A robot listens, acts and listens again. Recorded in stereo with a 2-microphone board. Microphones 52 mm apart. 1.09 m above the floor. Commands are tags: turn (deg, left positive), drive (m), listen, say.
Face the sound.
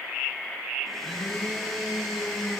<turn deg="30"/>
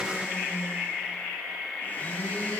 <turn deg="145"/>
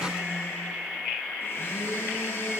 <turn deg="50"/>
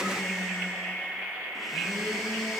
<say>Found it: a blender, straight ahead.</say>